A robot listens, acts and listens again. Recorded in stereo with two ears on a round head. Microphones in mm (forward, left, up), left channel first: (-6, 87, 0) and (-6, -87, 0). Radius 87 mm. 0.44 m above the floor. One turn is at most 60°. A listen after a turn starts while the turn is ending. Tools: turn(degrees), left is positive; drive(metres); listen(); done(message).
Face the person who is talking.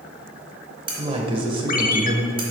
turn(degrees=-30)
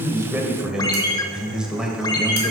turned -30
done("Found it: a man speaking, straight ahead.")